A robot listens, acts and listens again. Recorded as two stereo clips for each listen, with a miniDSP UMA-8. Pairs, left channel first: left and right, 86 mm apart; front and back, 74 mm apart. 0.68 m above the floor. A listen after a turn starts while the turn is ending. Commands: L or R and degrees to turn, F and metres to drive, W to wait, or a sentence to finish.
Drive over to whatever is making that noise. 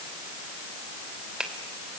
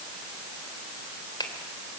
R10
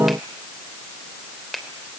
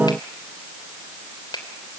F1.0
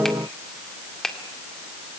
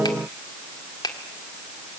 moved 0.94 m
F1.0
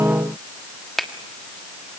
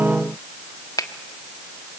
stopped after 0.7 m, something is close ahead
I am next to the finger snap.